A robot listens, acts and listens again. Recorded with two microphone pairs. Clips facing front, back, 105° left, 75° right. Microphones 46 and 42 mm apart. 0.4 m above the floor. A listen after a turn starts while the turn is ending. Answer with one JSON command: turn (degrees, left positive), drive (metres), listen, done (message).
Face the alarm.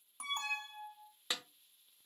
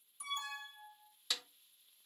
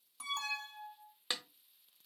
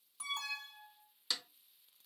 {"turn": 15}
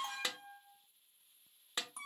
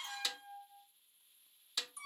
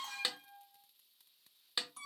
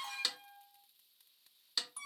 {"done": "Facing the alarm."}